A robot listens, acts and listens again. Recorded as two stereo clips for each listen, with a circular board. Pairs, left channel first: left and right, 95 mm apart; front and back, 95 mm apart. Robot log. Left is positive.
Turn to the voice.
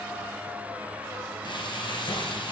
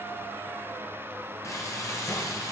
cmd idle
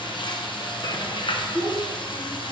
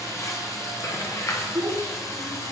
note: The child speaking: 150° left.
cmd yaw +150
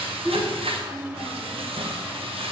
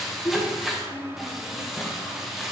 end: Facing the child speaking.